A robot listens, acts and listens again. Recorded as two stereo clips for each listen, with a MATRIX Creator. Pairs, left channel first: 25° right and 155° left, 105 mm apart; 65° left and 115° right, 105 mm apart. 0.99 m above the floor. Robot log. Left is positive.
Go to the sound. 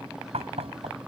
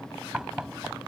note: The knocking: 165° left.
cmd yaw +165
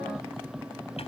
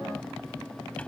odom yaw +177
note: Nothing new. It was at 10° right.
cmd yaw -10
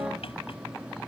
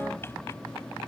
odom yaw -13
cmd idle
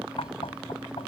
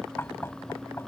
cmd fwd 1.0
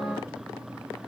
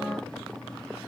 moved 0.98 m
cmd idle
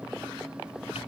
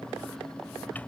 cmd idle
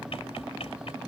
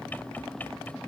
cmd fwd 1.0
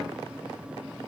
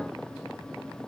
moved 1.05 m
cmd idle
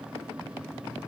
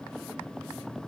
cmd idle
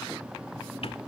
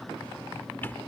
end: Facing where the knocking came from. I can't hear it now. I did not reach it.